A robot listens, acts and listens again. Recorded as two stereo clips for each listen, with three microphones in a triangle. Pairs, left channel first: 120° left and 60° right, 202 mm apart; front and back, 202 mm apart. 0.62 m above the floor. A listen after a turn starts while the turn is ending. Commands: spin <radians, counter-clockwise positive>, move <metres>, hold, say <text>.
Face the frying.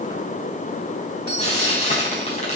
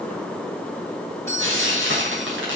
spin 3.05
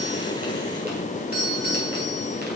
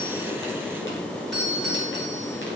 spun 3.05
hold
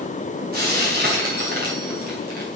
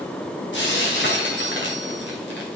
spin -0.35
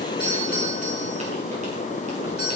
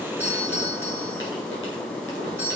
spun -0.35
hold
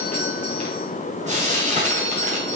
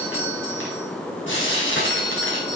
say Found it: frying, straight ahead.